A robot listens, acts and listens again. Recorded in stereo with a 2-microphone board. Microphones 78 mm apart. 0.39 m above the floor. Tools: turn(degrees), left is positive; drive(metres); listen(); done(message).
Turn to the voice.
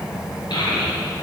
turn(degrees=90)
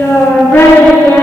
turn(degrees=30)
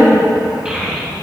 turn(degrees=-10)
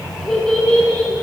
turn(degrees=10)
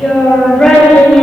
done("Facing the child speaking, 2 to 4 m away.")